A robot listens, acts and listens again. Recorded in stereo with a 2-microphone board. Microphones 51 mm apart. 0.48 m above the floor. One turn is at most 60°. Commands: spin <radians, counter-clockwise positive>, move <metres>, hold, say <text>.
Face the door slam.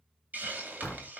spin 0.26
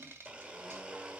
hold
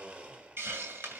say I heard a door slam, but can't make it out now. It was about straight ahead or 150° left.